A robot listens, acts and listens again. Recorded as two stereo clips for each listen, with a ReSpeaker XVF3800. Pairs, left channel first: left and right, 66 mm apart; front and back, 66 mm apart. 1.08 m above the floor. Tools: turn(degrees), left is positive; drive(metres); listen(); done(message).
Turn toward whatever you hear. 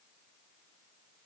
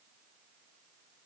listen()
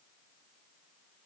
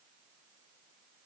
listen()
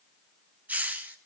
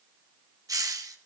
turn(degrees=-150)
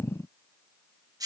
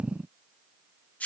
turn(degrees=-70)
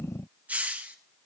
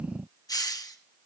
turn(degrees=-20)
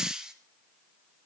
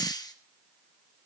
turn(degrees=-10)
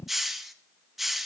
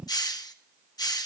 done("Found it: a hiss, straight ahead, 1 to 2 m away.")